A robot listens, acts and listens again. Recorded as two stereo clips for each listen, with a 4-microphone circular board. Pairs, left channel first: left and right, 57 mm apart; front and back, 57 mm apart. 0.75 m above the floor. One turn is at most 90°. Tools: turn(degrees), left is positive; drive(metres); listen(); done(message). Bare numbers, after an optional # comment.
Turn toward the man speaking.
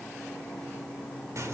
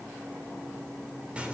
listen()
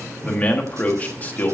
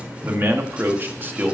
# The man speaking: 140° left.
turn(90)
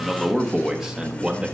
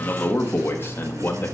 # The man speaking is now 20° right.
turn(-20)
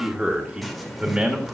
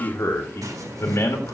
# The man speaking is now 20° right.
turn(-20)
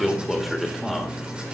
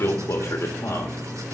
done("Facing the man speaking, 1 to 2 m away.")